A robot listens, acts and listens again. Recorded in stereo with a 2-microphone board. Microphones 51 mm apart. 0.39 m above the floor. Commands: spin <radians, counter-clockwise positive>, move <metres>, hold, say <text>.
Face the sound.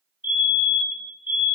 spin -0.70
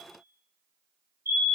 spin -1.75
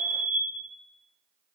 spin -0.35
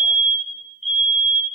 say Facing the fire alarm, over 4 m away.